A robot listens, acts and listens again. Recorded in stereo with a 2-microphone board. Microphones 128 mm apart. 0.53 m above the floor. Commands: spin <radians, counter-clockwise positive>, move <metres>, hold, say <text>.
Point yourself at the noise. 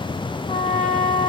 spin 1.22
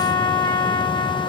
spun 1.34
spin 0.44
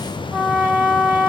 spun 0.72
spin -0.26
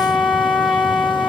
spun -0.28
say Facing the trumpet, 1 to 2 m away.